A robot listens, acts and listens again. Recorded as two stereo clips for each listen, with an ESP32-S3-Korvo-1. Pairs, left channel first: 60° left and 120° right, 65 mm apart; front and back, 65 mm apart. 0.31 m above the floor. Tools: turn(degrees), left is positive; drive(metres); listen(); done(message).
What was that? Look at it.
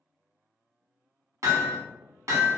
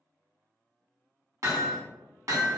turn(degrees=-150)
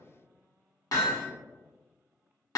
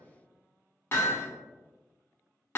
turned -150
turn(degrees=50)
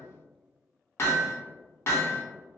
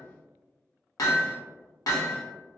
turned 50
turn(degrees=20)
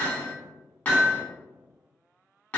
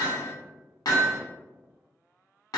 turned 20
done("Facing the hammering.")